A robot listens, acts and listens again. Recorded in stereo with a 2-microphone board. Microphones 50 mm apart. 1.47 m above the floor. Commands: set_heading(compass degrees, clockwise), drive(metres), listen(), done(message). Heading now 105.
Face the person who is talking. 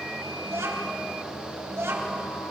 set_heading(195)
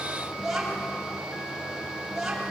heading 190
done("Facing the child speaking, over 4 m away.")